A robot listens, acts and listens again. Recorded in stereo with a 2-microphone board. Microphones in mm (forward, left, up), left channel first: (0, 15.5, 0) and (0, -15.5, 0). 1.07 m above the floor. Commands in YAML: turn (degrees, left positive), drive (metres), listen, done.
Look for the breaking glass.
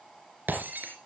turn: -70
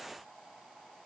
listen: true
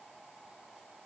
done: "I heard breaking glass, but can't make it out now. It was about straight ahead or 40° right."